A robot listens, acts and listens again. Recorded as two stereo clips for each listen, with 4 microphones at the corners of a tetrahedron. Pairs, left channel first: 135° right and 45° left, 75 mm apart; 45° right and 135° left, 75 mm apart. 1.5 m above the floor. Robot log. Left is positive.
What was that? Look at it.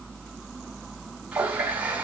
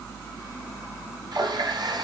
note: The running tap: 115° left.
cmd yaw +115
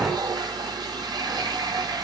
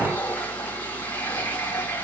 note: The running tap is now 20° left.
cmd yaw +20
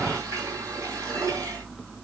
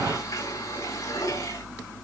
end: Found it: a running tap, straight ahead, over 4 m away.